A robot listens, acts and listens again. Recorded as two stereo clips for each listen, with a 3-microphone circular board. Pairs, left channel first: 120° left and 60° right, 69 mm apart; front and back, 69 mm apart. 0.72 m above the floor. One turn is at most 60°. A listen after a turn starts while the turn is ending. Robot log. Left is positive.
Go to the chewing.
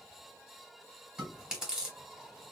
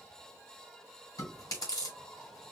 note: The chewing: 20° left.
cmd yaw +20
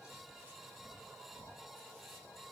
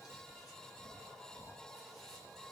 cmd idle
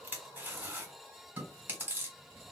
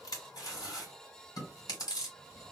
cmd fwd 1.0
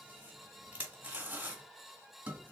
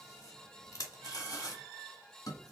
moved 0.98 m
cmd fwd 1.0
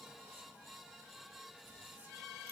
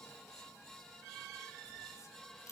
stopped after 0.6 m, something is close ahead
cmd idle
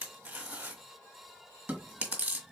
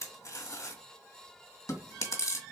end: Arrived at the chewing, straight ahead.